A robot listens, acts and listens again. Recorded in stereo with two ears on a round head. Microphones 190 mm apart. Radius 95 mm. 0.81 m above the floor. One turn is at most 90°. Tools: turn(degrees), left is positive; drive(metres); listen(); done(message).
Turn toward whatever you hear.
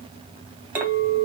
turn(degrees=-30)
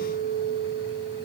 turn(degrees=-90)
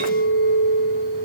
turn(degrees=-85)
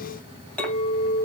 done("Facing the clink.")